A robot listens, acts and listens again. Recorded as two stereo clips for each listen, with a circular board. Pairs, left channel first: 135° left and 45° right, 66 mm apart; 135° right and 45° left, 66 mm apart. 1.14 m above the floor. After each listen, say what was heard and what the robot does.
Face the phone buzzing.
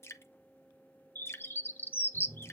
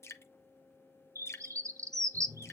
The phone buzzing: 100° right. Turn 100° right.
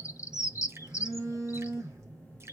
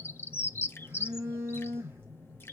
Found it: a phone buzzing, straight ahead.